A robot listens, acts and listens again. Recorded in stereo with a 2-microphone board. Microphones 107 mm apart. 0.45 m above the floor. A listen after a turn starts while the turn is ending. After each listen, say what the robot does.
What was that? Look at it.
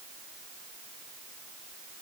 Keep listening.
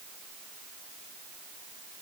Keep listening.
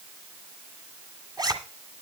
Turn 40° right.
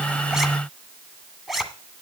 Facing the zipper.